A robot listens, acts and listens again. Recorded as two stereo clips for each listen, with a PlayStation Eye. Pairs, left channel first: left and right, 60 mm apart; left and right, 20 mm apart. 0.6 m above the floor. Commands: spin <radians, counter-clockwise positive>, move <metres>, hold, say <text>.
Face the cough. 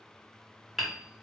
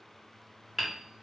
hold
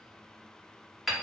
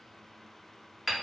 hold
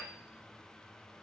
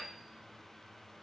say I can't make out a cough to turn to.